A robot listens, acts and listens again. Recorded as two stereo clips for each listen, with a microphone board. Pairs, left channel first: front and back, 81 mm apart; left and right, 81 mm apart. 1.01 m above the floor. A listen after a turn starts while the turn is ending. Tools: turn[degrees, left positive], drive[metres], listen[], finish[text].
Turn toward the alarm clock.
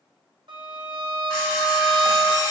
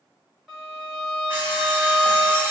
Thought: The alarm clock: 30° right.
Action: turn[-30]
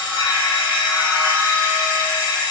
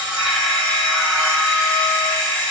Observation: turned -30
Thought: The alarm clock is now 10° left.
Action: turn[10]
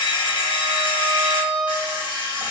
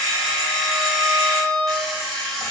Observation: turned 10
Action: finish[Found it: an alarm clock, straight ahead.]